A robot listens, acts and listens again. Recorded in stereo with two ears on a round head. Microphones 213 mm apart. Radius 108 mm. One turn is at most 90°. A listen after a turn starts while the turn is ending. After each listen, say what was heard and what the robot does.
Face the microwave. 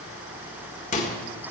The microwave: about 30° left or 150° left. Turn 30° left.
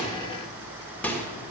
So it is at 10° left. Turn 10° left.
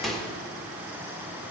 Found it: a microwave, straight ahead.